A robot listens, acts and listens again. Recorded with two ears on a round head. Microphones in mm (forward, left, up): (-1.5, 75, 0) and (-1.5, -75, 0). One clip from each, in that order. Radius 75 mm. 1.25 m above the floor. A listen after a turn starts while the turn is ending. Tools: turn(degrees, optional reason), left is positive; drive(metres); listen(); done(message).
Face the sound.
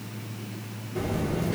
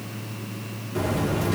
turn(degrees=-45, reason="The buzzer: about 45° right or 135° right.")
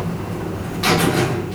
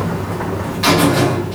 done("Facing the buzzer, 1 to 2 m away.")